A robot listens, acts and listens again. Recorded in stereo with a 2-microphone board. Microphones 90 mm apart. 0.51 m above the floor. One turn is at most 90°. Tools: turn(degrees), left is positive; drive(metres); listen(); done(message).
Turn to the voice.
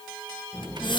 turn(degrees=40)
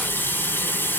turn(degrees=90)
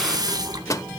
turn(degrees=30)
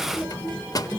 turn(degrees=25)
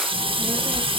turn(degrees=-10)
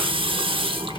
done("Facing the child speaking, over 4 m away.")